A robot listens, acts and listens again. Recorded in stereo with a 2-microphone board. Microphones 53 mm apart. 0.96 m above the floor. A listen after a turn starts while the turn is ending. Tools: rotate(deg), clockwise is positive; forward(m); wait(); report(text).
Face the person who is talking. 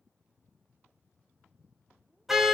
wait()
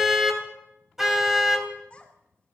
rotate(-25)
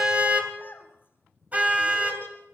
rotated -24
rotate(-130)
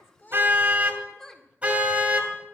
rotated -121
rotate(-10)
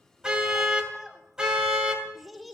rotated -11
report("Found it: a child speaking, straight ahead, 2 to 4 m away.")